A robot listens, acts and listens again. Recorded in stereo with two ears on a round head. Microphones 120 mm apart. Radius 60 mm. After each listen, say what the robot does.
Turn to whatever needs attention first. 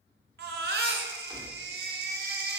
Turn 90° right.
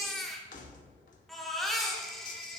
Found it: a baby crying, straight ahead, 1 to 2 m away.